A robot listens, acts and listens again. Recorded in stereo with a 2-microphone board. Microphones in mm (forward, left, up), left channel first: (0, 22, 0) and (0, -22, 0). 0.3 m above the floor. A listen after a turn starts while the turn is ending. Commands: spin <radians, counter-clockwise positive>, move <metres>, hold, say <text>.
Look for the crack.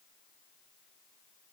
hold
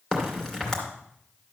spin 0.26
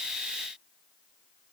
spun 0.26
hold
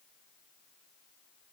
say I heard a crack, but can't make it out now. It was about straight ahead or 150° left.